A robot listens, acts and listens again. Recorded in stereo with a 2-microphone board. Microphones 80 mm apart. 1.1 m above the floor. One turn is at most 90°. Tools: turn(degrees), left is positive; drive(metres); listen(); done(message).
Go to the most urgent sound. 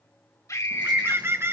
turn(degrees=40)
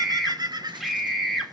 drive(metres=1.0)
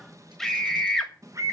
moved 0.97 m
drive(metres=1.0)
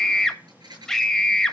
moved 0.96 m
drive(metres=1.0)
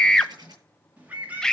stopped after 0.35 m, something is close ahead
turn(degrees=10)
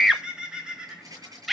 done("I am next to the scream.")